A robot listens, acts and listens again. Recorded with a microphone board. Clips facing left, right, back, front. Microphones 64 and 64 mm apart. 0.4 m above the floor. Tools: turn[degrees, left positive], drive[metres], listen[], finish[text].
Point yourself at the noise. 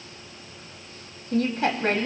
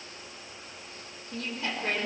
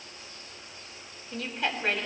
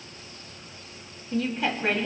Thought: The woman speaking: 85° left.
Action: turn[85]
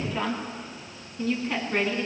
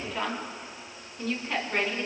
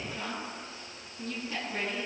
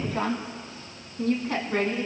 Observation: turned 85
Action: finish[Facing the woman speaking.]